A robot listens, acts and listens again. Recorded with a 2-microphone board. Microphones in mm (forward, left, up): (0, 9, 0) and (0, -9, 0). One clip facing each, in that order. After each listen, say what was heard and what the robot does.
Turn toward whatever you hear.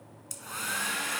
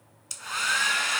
The hair dryer: about 40° right or 140° right. Turn 40° right.
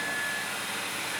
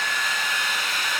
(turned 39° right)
So it is at 95° right. Turn 95° right.
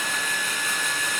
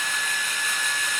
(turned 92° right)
Facing the hair dryer, under 1 m away.